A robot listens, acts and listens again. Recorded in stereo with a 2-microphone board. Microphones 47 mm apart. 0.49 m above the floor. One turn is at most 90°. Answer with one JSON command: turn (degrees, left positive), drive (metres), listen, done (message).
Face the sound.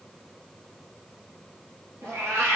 {"turn": -65}
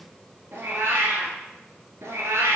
{"turn": -75}
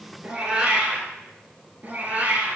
{"turn": -30}
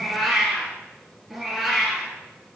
{"done": "Found it: a cat meowing, straight ahead."}